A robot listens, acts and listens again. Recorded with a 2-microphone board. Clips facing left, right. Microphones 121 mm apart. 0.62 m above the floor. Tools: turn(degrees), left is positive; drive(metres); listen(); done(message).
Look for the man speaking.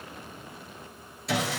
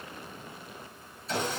listen()
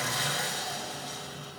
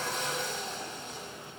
listen()
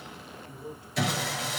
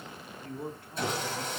turn(degrees=-55)
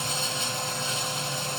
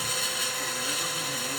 listen()
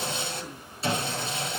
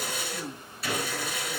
listen()
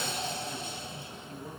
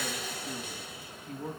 turn(degrees=-75)
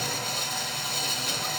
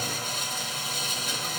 listen()
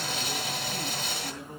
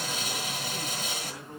done("Facing the man speaking, over 4 m away.")